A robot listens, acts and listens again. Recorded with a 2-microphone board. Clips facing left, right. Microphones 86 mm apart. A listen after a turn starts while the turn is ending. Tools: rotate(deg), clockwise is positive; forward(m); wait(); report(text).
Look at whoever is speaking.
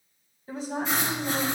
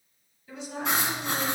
rotate(-40)
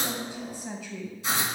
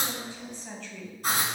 rotate(-10)
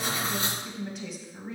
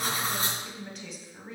report("Found it: a woman speaking, straight ahead, 1 to 2 m away.")